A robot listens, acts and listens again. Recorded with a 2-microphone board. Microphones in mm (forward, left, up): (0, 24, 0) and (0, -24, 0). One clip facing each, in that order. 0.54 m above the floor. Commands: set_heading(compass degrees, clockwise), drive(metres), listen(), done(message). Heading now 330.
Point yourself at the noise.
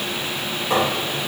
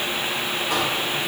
set_heading(300)
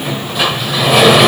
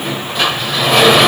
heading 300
done("Found it: a sliding door, straight ahead.")